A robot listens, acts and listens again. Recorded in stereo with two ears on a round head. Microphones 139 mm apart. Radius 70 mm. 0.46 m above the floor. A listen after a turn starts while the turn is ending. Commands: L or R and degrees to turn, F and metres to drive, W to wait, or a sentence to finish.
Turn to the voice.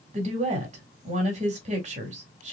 R45
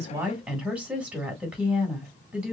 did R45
R10
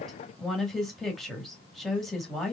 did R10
Facing the woman speaking.